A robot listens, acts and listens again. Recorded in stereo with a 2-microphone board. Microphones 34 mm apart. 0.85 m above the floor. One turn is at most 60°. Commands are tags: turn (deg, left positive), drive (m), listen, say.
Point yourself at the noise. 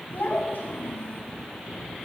<turn deg="60"/>
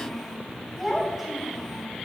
<say>Facing the child speaking.</say>